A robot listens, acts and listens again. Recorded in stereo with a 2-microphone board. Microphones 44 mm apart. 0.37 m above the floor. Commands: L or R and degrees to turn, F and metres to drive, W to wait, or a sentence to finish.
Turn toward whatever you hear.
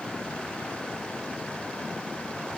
W
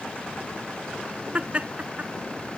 R30
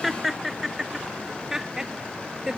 R15
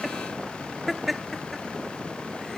Facing the laughter.